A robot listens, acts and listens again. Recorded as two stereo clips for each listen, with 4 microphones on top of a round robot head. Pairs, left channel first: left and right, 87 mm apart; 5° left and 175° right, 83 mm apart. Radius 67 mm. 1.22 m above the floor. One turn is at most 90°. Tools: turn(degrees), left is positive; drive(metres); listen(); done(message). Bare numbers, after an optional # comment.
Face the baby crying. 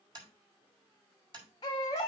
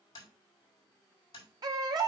# The baby crying: 150° left.
turn(90)
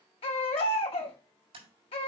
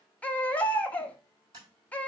# The baby crying is now 80° left.
turn(80)
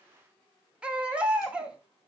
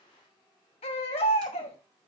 # The baby crying is now 15° right.
turn(-15)
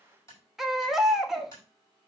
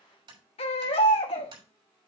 done("Found it: a baby crying, straight ahead.")